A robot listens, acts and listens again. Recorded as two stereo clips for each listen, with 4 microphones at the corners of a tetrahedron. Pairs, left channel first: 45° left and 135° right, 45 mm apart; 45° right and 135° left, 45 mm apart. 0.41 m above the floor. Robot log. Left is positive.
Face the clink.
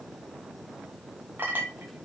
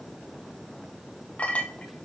note: The clink: 100° right.
cmd yaw -100
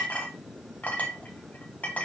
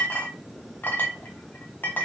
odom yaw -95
end: Found it: a clink, straight ahead.